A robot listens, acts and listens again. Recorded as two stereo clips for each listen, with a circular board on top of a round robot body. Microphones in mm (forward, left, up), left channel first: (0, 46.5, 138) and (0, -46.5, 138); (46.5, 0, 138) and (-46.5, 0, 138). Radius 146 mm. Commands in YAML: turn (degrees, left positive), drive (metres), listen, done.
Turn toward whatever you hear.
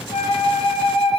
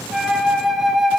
turn: 90
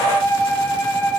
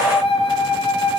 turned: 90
turn: 30
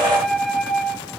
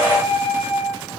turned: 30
done: "Facing the flute, 1 to 2 m away."